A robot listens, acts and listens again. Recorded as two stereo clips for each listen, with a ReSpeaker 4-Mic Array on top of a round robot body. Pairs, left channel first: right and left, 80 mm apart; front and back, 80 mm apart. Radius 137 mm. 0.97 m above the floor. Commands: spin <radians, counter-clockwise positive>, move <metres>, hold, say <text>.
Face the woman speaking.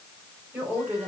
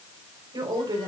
spin 2.97
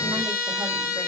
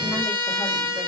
hold
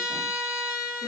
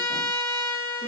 hold
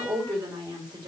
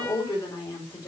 spin 0.96
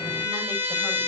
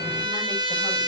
hold
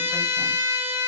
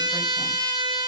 hold
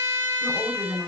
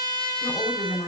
say Facing the woman speaking, over 4 m away.